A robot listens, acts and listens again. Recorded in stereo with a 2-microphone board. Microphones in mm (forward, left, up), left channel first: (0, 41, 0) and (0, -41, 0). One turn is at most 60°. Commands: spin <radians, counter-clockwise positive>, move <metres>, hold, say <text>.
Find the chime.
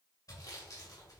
hold
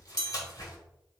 spin 0.96
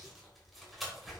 hold
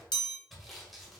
spin 1.05
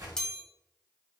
spin 0.17
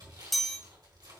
say Facing the chime, 1 to 2 m away.